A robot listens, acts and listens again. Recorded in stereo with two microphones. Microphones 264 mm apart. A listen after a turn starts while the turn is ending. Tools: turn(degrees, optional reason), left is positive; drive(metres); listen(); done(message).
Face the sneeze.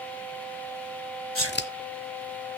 turn(degrees=-55, reason="The sneeze: about 55° right or 125° right.")
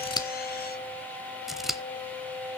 listen()
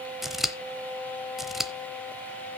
done("I heard a sneeze, but can't make it out now. It was about straight ahead or 70° right.")